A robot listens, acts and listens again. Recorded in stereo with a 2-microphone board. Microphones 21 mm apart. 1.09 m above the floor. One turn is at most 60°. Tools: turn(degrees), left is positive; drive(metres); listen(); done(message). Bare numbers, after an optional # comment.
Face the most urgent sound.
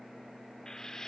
listen()
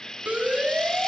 turn(-60)
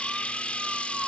# So it is at 30° right.
turn(-30)
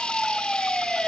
done("Facing the siren.")